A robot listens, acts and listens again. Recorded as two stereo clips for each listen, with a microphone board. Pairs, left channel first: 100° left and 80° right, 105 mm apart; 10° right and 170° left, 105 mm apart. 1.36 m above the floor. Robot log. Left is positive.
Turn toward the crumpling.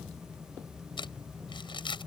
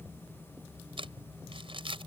note: The crumpling: 140° left.
cmd yaw +140
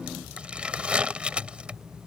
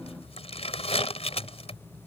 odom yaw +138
end: Facing the crumpling.